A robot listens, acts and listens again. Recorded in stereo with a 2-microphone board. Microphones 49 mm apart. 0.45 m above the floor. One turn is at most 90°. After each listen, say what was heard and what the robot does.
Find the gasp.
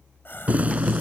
The gasp: about 50° left or 130° left. Turn 50° left.
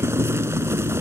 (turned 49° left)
Keep listening.
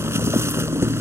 I heard a gasp, but can't make it out now. It was about straight ahead or 85° left.